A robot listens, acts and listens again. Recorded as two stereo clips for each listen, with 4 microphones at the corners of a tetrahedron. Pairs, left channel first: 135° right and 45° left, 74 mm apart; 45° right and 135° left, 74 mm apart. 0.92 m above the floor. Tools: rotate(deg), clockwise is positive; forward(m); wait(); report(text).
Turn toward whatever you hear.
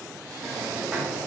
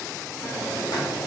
rotate(35)
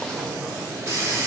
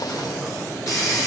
report("Found it: a hiss, straight ahead, under 1 m away.")